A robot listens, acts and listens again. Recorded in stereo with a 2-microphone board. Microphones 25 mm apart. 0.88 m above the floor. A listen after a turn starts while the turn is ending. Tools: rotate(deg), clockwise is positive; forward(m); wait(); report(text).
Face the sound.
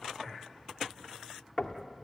rotate(-30)
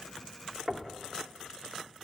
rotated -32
report("Found it: knocking, straight ahead.")